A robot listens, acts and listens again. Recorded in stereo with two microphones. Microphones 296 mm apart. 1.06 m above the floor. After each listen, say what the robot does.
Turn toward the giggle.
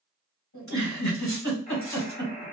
Turn 70° left.
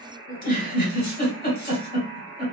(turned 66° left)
Turn 30° left.
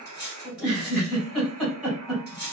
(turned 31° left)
Facing the giggle.